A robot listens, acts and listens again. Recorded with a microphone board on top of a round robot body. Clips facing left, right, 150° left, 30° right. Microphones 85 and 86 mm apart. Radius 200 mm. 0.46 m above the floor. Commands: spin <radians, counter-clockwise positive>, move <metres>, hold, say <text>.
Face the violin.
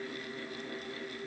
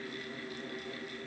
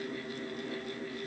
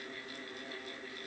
hold
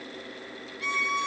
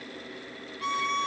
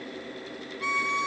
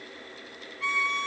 spin -2.44
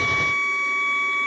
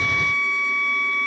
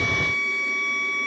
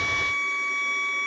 spin 0.44
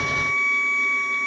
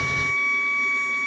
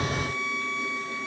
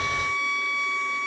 say Facing the violin, 1 to 2 m away.